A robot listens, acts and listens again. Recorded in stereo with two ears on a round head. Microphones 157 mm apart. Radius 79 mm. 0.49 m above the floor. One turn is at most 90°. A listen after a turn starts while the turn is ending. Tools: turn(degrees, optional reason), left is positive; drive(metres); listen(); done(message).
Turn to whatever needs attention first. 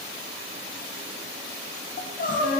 turn(degrees=50, reason="The crying: about 50° left or 130° left.")
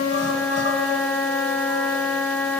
listen()
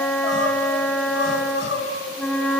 turn(degrees=80, reason="So it is at 80° left.")
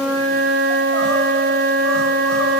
listen()
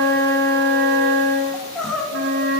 done("Facing the crying.")